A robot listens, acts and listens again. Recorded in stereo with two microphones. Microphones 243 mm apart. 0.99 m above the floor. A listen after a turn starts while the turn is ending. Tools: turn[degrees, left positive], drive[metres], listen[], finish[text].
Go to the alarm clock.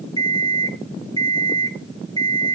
Thought: The alarm clock: about 15° left or 165° left.
Action: turn[15]
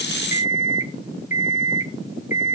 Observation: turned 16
Thought: So it is at 150° left.
Action: turn[150]
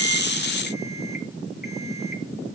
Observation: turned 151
Action: listen[]
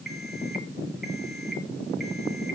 Action: drive[1.0]
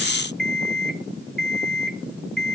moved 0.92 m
Action: drive[1.0]
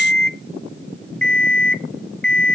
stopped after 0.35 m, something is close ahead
Action: finish[I am next to the alarm clock.]